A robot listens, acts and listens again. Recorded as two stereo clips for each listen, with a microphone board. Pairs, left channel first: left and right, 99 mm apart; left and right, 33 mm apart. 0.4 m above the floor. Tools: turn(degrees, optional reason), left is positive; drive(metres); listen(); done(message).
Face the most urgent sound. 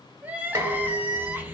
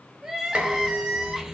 turn(degrees=-15, reason="The crying: about 15° right or 165° right.")
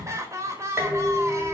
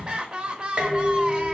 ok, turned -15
turn(degrees=-150, reason="So it is at 150° right.")
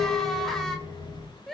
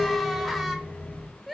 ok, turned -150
done("Facing the crying, under 1 m away.")